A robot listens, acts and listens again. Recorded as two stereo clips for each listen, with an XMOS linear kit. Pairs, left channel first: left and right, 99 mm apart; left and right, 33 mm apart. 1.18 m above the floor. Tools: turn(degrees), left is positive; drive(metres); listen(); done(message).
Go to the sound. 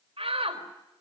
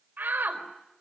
turn(degrees=-90)
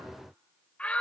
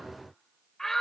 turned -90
turn(degrees=10)
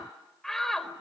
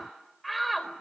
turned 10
drive(metres=1.0)
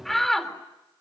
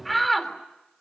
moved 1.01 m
drive(metres=1.0)
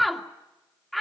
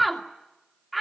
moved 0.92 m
drive(metres=1.0)
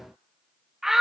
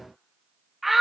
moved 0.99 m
drive(metres=1.0)
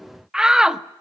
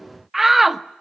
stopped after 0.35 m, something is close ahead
done("I am next to the shout.")